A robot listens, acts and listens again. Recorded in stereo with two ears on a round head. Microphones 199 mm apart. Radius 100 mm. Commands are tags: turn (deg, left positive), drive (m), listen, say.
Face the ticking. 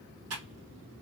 <listen/>
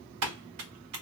<listen/>
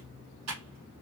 <say>I can't make out ticking, only typing on a keyboard.</say>